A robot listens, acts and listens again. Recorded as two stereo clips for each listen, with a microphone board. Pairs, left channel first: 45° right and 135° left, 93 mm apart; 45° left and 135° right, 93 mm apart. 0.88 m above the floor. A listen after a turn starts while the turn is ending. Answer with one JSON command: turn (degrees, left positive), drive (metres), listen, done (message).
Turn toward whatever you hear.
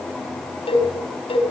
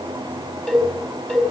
{"turn": -55}
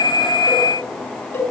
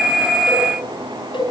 {"done": "Found it: a cowbell, straight ahead, over 4 m away."}